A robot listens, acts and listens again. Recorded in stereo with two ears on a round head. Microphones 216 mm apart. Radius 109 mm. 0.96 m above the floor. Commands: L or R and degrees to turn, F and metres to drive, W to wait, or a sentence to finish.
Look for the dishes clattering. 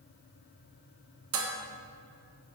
R55
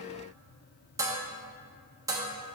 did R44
R15
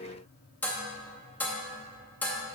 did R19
Facing the dishes clattering.